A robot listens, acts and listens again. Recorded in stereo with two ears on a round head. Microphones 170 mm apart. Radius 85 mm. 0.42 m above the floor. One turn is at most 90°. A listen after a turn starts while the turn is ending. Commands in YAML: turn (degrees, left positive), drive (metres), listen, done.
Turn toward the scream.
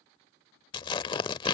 listen: true
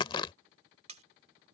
listen: true
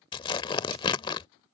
done: "I can't make out a scream to turn to."